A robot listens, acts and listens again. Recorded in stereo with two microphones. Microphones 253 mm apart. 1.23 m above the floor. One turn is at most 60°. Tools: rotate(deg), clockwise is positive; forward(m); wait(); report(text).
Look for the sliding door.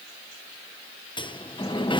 rotate(-20)
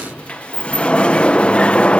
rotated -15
report("Facing the sliding door.")